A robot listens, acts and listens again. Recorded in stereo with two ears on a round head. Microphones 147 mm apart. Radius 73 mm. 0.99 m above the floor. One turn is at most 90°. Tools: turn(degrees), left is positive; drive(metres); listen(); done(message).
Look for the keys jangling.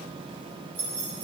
turn(degrees=-90)
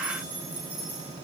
turn(degrees=-10)
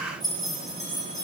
done("Facing the keys jangling, over 4 m away.")